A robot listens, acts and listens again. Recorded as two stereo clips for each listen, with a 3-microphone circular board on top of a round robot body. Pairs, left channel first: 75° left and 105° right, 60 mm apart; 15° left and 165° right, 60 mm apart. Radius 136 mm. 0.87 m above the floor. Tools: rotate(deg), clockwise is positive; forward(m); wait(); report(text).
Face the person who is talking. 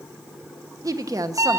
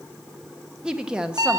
rotate(90)
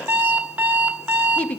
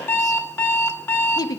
report("Found it: a woman speaking, straight ahead, 1 to 2 m away.")